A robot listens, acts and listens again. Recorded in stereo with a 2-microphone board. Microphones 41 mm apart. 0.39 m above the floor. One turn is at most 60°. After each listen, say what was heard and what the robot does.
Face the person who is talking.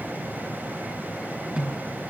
Keep listening.
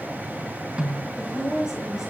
Turn 30° right.
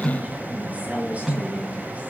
So it is at 145° right. Turn 60° right.
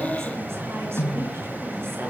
Nothing new. It was at 85° right. Turn 60° right.
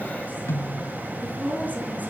The woman speaking is now 40° right. Turn 40° right.
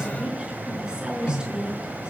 The woman speaking is now 20° right. Turn 20° right.
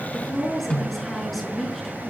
Found it: a woman speaking, straight ahead.